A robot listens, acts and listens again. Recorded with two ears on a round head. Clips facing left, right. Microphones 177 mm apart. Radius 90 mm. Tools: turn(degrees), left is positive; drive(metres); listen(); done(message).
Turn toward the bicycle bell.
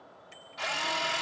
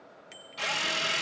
turn(degrees=-90)
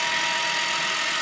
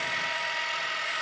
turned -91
listen()
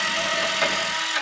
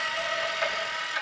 listen()
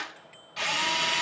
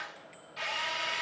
done("Facing where the bicycle bell came from. I can't hear it now.")